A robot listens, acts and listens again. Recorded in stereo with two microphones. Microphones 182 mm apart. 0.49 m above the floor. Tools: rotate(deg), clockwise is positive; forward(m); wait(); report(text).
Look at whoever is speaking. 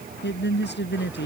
rotate(-90)
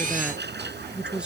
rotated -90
report("Facing the woman speaking.")